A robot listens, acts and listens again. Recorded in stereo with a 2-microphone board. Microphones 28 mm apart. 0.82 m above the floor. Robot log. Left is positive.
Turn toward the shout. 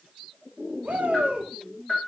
note: The shout: about 70° right or 110° right.
cmd yaw -70
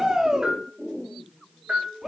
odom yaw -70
note: So it is at 20° right.
cmd yaw -20
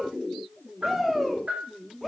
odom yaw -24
end: Found it: a shout, straight ahead.